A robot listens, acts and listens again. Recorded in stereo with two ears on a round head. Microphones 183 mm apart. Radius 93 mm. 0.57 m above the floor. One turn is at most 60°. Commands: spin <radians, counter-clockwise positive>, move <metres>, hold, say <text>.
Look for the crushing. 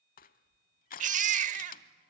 spin 0.70
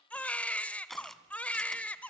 say Found it: crushing, straight ahead.